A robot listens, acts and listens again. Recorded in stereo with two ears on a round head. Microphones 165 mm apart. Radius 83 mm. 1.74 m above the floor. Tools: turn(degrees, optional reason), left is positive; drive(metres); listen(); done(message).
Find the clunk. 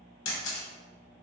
listen()
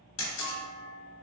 turn(degrees=30)
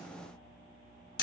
listen()
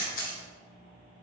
done("I heard a clunk, but can't make it out now. It was about 25° right or 145° left.")